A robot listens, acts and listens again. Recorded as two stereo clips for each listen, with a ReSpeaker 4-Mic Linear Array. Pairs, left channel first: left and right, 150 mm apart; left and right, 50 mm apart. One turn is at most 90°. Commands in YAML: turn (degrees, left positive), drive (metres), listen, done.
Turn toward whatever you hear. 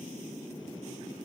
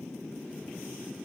listen: true
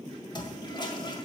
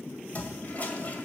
turn: 35
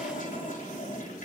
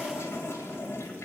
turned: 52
turn: 90
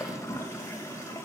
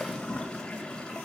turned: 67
turn: 20
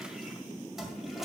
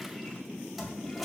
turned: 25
done: "Facing the toilet flushing."